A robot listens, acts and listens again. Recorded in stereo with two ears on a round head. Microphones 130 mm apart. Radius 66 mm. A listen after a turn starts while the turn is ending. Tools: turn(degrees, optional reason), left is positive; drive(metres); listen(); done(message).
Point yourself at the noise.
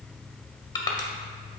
turn(degrees=25, reason="The crushing: about 25° left or 155° left.")
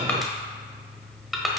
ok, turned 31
done("Found it: crushing, straight ahead.")